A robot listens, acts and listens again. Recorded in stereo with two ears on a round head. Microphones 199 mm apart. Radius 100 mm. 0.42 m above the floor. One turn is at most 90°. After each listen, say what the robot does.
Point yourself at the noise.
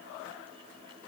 Keep listening.
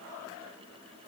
Keep listening.
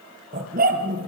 Turn 40° right.
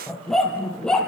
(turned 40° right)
Found it: a dog barking, straight ahead.